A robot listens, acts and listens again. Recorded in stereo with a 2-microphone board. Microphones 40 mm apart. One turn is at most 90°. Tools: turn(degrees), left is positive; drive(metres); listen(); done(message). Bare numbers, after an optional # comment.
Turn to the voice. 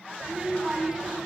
# The child speaking: about 20° right or 160° right.
turn(-20)
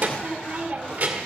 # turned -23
# So it is at 135° right.
turn(-90)
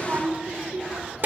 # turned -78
# The child speaking is now 60° right.
turn(-60)
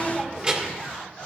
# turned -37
# The child speaking is now 20° right.
turn(-20)
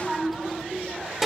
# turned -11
# The child speaking is now 10° right.
turn(-10)
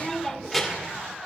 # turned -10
done("Found it: a child speaking, straight ahead, 1 to 2 m away.")